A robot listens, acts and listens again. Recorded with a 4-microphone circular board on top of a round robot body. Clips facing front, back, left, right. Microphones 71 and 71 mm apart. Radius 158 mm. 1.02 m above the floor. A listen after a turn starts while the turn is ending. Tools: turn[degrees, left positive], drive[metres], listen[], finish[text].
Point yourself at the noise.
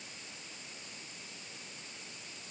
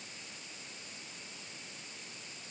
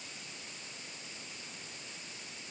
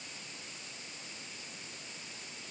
Action: listen[]
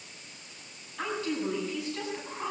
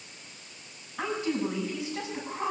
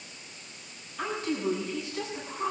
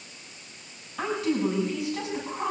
Thought: The woman speaking: 105° right.
Action: turn[-105]
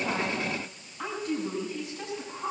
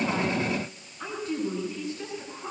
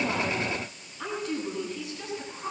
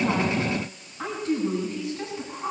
Thought: The woman speaking is now 30° right.
Action: turn[-30]
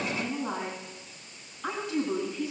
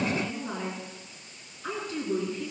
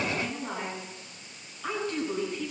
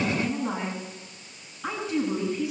Thought: The woman speaking is now 10° right.
Action: turn[-10]
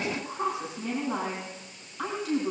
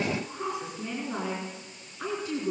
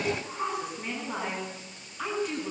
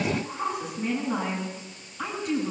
Action: finish[Found it: a woman speaking, straight ahead, over 4 m away.]